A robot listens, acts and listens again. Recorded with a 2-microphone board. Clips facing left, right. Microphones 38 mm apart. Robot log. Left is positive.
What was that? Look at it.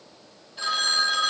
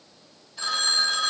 note: The phone ringing: about 25° left or 155° left.
cmd yaw +25
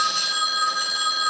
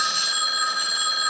end: Found it: a phone ringing, straight ahead, 2 to 4 m away.